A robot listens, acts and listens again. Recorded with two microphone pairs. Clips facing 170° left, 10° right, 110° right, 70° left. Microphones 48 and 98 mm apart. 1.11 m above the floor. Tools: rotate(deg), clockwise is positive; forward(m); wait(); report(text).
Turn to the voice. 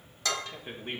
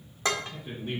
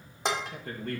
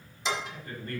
rotate(135)
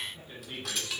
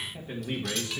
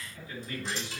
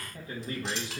rotate(-20)
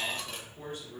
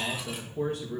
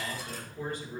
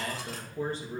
rotate(-10)
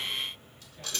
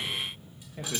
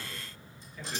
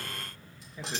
report("Facing the man speaking.")